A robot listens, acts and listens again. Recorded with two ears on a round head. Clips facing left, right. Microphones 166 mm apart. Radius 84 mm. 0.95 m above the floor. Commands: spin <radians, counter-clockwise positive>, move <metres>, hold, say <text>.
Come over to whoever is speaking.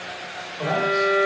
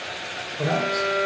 spin -0.61
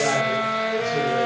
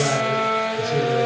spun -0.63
hold
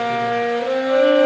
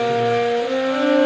hold
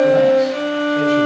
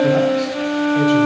say I heard a man speaking, but can't make it out now. It was about straight ahead or 105° right. I did not reach it.